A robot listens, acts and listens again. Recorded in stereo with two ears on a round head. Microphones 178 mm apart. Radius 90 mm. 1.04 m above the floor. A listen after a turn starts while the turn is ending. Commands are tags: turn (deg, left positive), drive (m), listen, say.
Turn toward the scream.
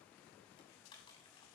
<listen/>
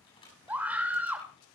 <turn deg="-30"/>
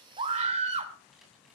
<turn deg="-140"/>
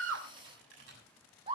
<turn deg="-30"/>
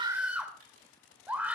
<say>Facing the scream, 2 to 4 m away.</say>